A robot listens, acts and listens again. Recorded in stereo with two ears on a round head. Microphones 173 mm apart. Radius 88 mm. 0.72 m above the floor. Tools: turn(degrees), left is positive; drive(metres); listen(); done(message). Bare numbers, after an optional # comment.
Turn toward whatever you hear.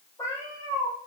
# The cat meowing: about 15° left or 165° left.
turn(15)
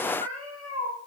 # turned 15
turn(30)
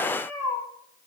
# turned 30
# So it is at 20° right.
turn(-20)
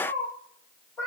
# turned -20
# The cat meowing is now 10° left.
turn(10)
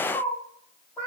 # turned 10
# The cat meowing is now 10° left.
turn(10)
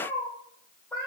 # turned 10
done("Found it: a cat meowing, straight ahead.")